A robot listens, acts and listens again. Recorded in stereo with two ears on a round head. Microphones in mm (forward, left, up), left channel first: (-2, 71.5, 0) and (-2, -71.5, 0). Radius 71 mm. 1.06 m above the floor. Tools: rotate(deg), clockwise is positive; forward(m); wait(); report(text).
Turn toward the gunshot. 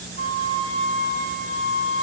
wait()
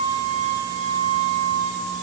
wait()
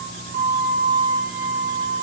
report("I can't make out a gunshot to turn to.")